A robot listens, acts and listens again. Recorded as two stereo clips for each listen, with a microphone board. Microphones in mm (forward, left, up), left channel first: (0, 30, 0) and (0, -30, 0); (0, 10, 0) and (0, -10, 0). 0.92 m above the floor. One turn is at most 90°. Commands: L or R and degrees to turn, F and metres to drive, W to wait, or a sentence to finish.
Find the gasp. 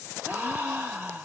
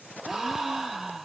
R25
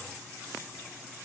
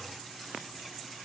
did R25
W
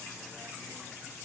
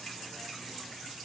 I heard a gasp, but can't make it out now. It was about straight ahead or 130° right.